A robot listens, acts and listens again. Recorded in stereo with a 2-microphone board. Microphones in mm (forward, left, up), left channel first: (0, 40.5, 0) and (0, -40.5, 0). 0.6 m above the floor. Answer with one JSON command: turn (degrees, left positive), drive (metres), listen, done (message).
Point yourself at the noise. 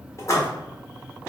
{"turn": 40}
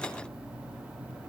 {"listen": true}
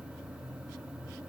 {"done": "I heard a splash, but can't make it out now. It was about straight ahead or 100° left."}